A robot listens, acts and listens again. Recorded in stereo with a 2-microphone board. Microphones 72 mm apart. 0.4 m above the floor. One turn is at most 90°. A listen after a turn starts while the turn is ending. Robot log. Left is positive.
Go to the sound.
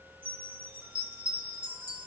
note: The chime: about 20° right or 160° right.
cmd yaw -20
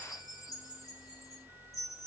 cmd fwd 1.0
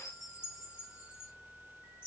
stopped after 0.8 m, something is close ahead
note: The chime is now 20° right.
cmd yaw -20
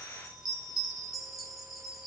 end: Arrived at the chime, straight ahead.